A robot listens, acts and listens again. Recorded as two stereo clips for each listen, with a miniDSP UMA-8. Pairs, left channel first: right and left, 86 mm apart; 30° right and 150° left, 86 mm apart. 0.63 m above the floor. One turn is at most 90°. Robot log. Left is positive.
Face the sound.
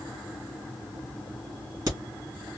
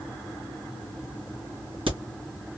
note: The crack: 135° left.
cmd yaw +90
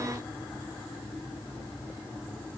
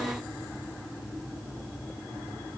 note: Nothing new. It was at 45° left.
cmd yaw +45
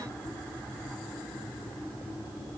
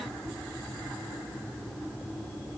end: I heard a crack from this way, but can't make it out now.